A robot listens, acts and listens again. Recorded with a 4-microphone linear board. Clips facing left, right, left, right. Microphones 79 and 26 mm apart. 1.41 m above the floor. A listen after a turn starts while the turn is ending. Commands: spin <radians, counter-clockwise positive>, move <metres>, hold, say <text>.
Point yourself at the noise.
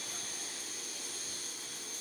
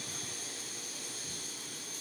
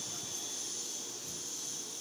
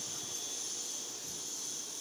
hold
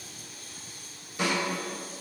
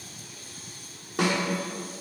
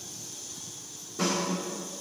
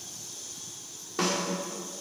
spin -1.57
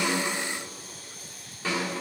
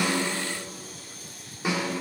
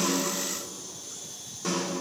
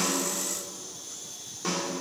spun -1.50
spin -0.26
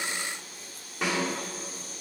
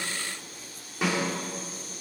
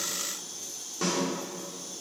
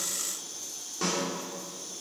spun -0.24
say Found it: a snare drum, straight ahead, 2 to 4 m away.